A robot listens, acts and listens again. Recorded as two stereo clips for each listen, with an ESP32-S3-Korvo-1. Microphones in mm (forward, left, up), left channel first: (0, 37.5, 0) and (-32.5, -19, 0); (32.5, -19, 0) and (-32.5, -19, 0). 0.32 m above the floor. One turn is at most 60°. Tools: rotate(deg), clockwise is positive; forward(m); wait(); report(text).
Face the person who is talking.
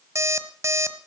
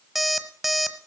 wait()
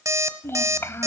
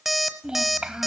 rotate(-60)
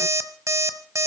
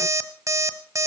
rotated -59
rotate(-45)
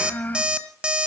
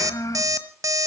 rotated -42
report("Found it: a child speaking, straight ahead, 1 to 2 m away.")